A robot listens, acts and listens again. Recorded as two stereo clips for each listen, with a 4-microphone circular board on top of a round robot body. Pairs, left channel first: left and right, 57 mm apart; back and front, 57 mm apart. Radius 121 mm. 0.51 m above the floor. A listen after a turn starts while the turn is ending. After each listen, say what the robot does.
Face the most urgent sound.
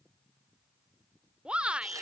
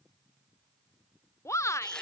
Turn 160° right.
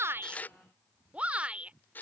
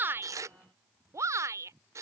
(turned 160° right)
Turn 20° right.
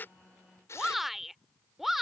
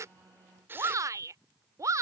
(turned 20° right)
Found it: a shout, straight ahead.